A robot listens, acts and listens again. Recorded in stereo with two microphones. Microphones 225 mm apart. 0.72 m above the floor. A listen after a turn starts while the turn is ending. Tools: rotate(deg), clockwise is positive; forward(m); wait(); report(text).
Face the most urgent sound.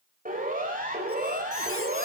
rotate(40)
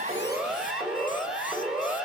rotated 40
report("Found it: a siren, straight ahead.")